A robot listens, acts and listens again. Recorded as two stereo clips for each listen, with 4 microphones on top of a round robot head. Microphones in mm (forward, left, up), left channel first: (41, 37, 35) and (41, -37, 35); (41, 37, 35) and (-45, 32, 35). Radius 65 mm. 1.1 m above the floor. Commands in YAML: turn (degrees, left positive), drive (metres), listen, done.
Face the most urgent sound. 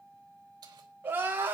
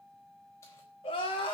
turn: -30
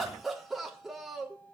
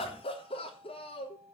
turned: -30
done: "Facing the crying, 2 to 4 m away."